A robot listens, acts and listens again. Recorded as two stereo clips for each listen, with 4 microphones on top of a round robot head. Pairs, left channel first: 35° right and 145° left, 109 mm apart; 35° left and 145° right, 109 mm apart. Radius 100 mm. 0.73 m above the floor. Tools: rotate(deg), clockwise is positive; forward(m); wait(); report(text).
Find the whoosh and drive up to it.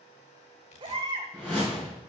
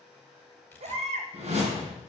rotate(120)
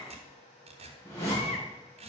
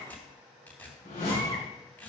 rotate(-30)
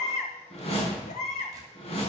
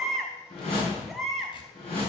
forward(1.0)
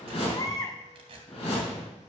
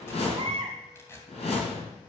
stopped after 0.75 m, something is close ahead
report("Blocked. The whoosh is further on, straight ahead.")